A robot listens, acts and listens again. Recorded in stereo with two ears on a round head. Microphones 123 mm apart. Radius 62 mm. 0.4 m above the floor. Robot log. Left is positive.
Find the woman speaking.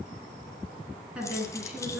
cmd yaw -30
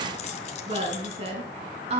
note: So it is at 130° right.
cmd yaw -130
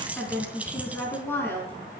note: The woman speaking is now 15° left.
cmd yaw +15
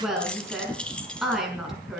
end: Found it: a woman speaking, straight ahead, over 4 m away.